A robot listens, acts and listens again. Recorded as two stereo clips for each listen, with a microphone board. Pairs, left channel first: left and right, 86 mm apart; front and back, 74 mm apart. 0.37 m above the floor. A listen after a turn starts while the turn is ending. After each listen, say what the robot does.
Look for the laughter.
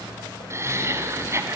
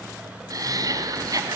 Turn 145° right.
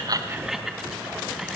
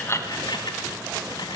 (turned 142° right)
Facing the laughter.